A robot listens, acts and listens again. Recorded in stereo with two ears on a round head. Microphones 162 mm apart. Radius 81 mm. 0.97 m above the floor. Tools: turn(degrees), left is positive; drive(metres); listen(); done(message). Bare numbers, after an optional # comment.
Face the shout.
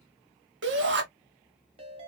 # The shout: about 70° right or 110° right.
turn(-70)
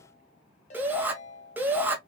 # So it is at 10° right.
turn(-10)
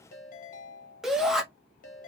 done("Facing the shout.")